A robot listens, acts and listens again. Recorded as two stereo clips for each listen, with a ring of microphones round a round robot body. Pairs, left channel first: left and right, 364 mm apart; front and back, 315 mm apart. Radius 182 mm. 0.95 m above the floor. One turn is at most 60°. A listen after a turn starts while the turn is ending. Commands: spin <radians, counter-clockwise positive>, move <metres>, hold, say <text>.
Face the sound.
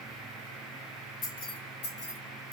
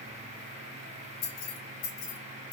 spin 0.61
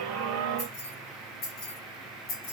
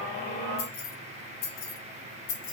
spin 0.61
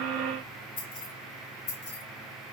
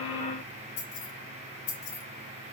spin 0.52
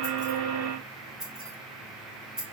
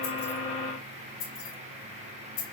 say Facing the keys jangling.